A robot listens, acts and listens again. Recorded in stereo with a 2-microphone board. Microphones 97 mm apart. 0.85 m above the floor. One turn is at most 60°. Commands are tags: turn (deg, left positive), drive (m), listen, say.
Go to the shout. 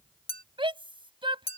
<turn deg="-60"/>
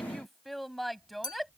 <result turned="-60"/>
<drive m="1.0"/>
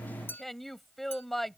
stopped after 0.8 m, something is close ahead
<say>Something is in my way. I am facing the shout but have not reached it.</say>